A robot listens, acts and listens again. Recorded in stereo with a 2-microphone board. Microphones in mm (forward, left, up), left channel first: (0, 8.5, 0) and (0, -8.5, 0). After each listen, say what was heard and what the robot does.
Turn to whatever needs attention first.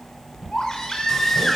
The baby crying: about 30° left or 150° left. Turn 30° left.
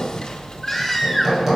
Found it: a baby crying, straight ahead.